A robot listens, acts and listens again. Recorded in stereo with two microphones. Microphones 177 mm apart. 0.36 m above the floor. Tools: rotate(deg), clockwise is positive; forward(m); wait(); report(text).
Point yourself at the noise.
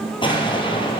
rotate(-30)
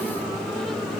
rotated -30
wait()
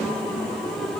report("I heard an explosion, but can't make it out now. It was about straight ahead or 120° left.")